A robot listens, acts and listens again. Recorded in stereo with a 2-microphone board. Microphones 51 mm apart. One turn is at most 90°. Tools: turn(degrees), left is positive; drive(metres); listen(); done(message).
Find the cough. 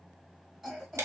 turn(degrees=-30)
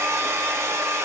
listen()
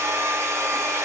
listen()
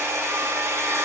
done("I heard a cough, but can't make it out now. It was about 15° left or 135° right.")